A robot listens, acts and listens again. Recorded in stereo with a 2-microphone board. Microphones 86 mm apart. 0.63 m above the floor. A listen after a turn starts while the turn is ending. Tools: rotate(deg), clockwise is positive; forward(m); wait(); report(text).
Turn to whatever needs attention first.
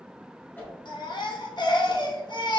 rotate(-55)
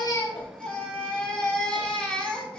rotate(-10)
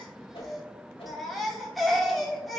report("Found it: a baby crying, straight ahead.")